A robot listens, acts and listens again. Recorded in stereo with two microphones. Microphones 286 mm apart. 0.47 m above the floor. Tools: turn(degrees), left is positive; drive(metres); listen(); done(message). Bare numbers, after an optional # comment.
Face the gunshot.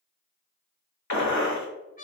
# The gunshot: about 75° left or 105° left.
turn(75)
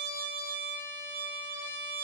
listen()
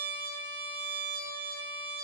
done("I heard a gunshot, but can't make it out now. It was about straight ahead or 30° left.")